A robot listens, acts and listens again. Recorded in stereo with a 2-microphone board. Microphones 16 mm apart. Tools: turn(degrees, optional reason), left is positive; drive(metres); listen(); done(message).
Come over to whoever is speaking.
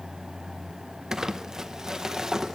listen()
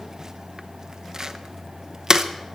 listen()
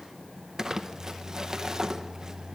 done("I can't make out anyone speaking to turn to.")